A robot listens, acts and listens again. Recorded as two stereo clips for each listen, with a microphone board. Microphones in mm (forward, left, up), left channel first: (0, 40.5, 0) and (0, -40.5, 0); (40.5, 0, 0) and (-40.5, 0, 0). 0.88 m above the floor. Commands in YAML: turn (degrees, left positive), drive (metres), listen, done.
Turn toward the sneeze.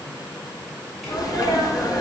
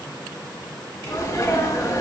turn: 50
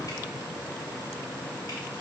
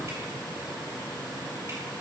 done: "I heard a sneeze from this way, but can't make it out now."